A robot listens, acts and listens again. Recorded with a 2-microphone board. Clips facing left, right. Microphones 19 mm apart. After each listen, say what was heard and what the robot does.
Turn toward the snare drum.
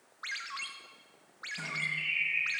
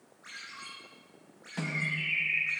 Turn 90° right.
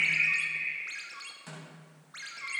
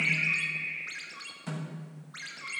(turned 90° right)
Facing the snare drum, over 4 m away.